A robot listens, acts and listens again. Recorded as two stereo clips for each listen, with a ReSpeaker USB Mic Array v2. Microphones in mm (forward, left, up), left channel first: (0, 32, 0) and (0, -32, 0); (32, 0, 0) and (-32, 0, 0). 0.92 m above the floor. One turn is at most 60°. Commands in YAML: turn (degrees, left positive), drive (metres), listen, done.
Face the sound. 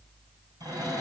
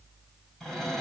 turn: -60
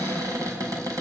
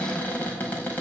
turn: -60
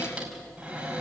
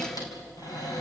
turn: -20
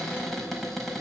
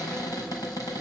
done: "Found it: a cupboard door, straight ahead."